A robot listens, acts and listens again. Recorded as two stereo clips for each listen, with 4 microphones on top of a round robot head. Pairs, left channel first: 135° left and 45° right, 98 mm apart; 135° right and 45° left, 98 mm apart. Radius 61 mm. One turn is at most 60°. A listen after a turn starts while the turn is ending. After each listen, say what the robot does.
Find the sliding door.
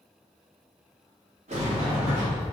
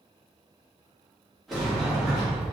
Turn 45° right.
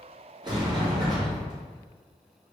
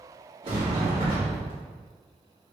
Turn 10° left.
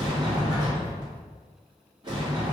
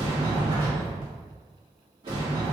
Facing the sliding door.